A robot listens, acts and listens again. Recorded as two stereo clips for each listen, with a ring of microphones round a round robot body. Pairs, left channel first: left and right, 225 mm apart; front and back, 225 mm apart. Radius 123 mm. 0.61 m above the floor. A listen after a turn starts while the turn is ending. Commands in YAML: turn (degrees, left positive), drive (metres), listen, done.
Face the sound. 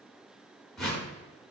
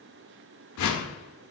done: "Found it: a whoosh, straight ahead."